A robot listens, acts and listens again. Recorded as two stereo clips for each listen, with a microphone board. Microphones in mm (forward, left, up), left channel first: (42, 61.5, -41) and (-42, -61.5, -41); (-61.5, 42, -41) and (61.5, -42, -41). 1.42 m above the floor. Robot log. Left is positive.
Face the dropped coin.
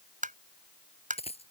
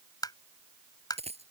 note: The dropped coin: 10° left.
cmd yaw +10
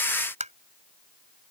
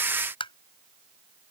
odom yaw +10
end: I heard a dropped coin from this way, but can't make it out now.